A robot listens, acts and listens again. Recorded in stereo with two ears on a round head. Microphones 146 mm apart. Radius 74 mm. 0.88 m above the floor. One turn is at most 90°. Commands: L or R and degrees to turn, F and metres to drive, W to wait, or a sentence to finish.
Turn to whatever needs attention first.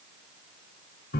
W
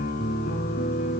W
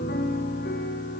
I can't make out anything urgent to turn to.